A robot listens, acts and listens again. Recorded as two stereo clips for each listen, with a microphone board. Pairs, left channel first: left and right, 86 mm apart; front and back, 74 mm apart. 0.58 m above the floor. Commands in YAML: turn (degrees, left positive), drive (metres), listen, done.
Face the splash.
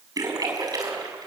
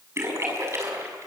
turn: -130
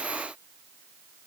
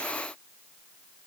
done: "I heard a splash from this way, but can't make it out now."